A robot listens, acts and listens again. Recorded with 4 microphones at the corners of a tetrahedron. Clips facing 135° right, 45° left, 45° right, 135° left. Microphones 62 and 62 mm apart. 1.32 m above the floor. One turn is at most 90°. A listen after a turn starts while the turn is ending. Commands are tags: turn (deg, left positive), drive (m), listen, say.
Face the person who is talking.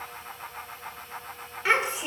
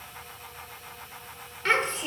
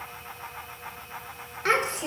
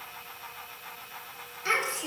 <turn deg="-60"/>
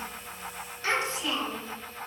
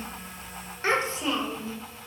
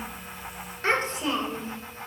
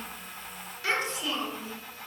<turn deg="-10"/>
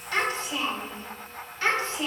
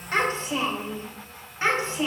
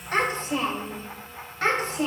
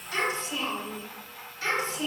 <turn deg="-25"/>
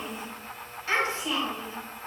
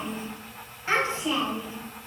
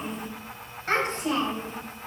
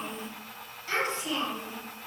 <turn deg="-20"/>
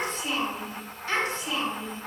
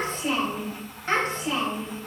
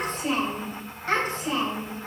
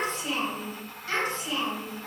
<say>Found it: a child speaking, straight ahead, 2 to 4 m away.</say>